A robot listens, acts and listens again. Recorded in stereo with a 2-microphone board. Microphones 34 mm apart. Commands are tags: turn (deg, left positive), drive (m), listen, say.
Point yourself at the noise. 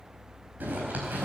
<turn deg="-55"/>
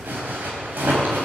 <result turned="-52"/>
<turn deg="-70"/>
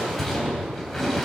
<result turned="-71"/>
<say>Found it: a zipper, straight ahead.</say>